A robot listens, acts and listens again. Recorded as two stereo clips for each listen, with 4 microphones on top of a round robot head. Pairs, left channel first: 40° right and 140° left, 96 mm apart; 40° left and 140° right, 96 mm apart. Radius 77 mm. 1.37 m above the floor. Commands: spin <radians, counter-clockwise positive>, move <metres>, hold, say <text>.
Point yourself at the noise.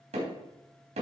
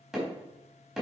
spin 2.27
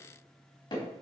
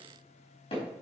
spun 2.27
say Facing the hammering.